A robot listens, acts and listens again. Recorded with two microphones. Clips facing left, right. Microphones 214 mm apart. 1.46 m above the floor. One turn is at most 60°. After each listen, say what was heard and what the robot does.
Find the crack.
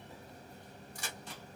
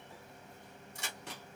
The crack: about 25° right or 155° right. Turn 25° right.
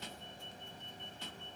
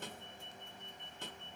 Keep listening.
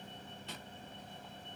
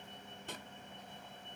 I heard a crack, but can't make it out now. It was about straight ahead or 130° right.